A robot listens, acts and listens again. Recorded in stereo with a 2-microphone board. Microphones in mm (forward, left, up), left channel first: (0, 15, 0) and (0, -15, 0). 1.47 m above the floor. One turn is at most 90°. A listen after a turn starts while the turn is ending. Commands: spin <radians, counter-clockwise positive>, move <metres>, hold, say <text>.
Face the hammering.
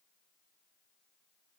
hold
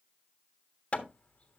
spin 0.70
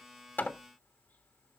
hold
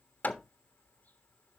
spin 1.57
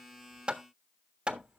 spin -0.61
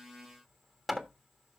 say Found it: hammering, straight ahead, 1 to 2 m away.